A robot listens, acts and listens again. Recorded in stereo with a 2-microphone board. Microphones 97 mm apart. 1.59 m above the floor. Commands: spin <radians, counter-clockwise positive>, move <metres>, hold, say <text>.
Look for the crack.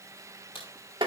spin 1.13
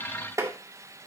hold
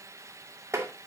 say I heard a crack, but can't make it out now. It was about straight ahead or 50° left.